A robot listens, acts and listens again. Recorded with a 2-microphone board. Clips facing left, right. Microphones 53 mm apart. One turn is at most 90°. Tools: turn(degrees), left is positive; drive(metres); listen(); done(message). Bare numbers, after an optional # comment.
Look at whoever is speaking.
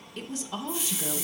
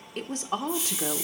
# The woman speaking: about 50° right or 130° right.
turn(-50)
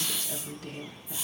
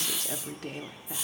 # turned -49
# So it is at 70° right.
turn(-70)
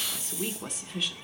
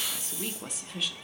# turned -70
done("Facing the woman speaking, under 1 m away.")